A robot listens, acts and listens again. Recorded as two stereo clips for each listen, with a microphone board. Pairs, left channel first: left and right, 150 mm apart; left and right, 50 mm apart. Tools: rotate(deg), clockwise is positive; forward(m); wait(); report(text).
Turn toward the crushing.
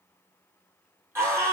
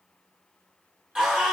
wait()
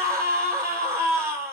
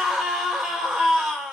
wait()
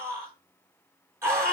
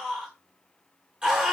report("I can't make out crushing to turn to.")